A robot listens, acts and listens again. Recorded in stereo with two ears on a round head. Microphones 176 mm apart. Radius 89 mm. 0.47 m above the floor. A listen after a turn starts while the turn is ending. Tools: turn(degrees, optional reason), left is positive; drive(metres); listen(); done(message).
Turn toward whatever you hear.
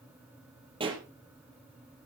turn(degrees=-30, reason="The pop: about 30° right or 150° right.")
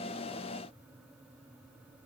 listen()
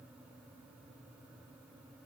done("I heard a pop, but can't make it out now. It was about straight ahead or 120° right.")